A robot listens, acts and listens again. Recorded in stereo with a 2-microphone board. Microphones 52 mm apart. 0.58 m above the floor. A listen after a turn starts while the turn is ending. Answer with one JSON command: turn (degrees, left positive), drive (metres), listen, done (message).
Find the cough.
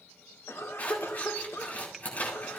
{"turn": 65}
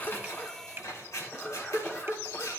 {"turn": 35}
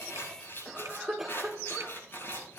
{"done": "Found it: a cough, straight ahead."}